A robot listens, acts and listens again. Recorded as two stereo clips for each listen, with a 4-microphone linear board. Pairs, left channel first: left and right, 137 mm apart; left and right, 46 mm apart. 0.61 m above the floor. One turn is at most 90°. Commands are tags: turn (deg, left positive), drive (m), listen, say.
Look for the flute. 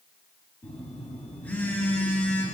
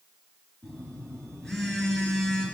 <listen/>
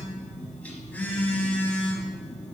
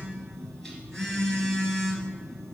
<listen/>
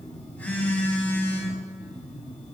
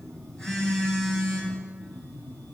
<say>I can't make out a flute to turn to.</say>